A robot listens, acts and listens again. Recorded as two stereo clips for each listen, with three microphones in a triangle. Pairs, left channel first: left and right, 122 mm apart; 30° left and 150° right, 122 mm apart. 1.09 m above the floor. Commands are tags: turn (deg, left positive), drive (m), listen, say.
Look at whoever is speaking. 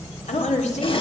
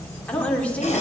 <turn deg="110"/>
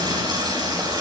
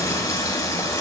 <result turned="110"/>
<listen/>
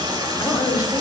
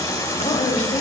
<turn deg="30"/>
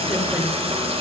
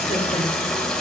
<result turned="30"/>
<listen/>
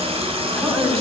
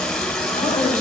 <say>Facing the woman speaking.</say>